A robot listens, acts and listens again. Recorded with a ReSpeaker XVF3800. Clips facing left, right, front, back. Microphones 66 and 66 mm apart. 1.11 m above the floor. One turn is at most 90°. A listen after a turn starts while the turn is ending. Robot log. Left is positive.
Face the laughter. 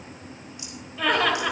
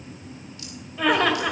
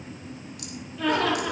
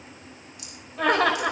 note: The laughter: straight behind.
cmd yaw +90
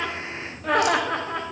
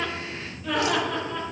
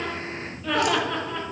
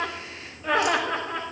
note: The laughter is now 115° left.
cmd yaw +90
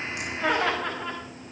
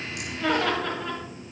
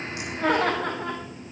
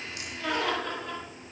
note: The laughter is now 10° left.
cmd yaw +10
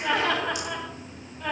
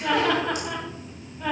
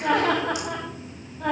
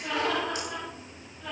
note: The laughter is now 10° right.
cmd yaw -10
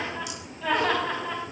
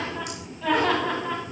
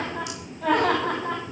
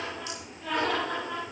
end: Facing the laughter.